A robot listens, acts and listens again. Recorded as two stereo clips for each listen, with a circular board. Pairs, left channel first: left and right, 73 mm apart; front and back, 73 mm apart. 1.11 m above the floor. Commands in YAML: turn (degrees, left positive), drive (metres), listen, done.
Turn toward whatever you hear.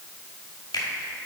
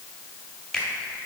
turn: 85
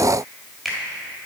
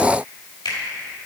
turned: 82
done: "Found it: a finger snap, straight ahead, 1 to 2 m away."